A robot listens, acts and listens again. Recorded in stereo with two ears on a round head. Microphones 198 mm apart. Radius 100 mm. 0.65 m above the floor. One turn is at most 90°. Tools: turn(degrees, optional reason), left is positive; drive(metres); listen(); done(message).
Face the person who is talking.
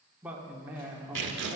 turn(degrees=-30)
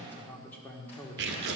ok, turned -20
turn(degrees=10, reason="So it is at 10° left.")
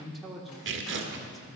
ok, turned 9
done("Found it: a man speaking, straight ahead.")